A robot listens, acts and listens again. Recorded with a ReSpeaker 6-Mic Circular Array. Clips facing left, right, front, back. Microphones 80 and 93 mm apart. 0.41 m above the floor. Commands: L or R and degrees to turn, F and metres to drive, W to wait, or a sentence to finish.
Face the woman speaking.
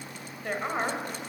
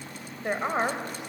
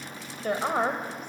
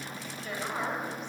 R20
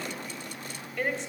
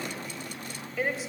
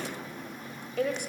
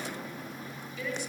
Facing the woman speaking, 2 to 4 m away.